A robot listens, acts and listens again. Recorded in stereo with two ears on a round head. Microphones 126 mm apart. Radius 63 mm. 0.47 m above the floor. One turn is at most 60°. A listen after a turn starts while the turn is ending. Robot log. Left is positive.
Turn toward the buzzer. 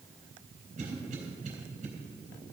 cmd idle
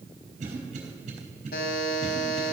note: The buzzer: about 75° left or 105° left.
cmd yaw +60
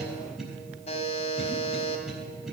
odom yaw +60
note: So it is at 45° left.
cmd yaw +45
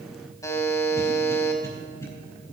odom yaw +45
note: The buzzer is now 20° left.
cmd yaw +20
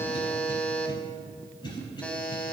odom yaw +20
note: The buzzer is now 10° left.
cmd yaw +10
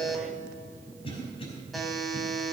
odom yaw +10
end: Facing the buzzer.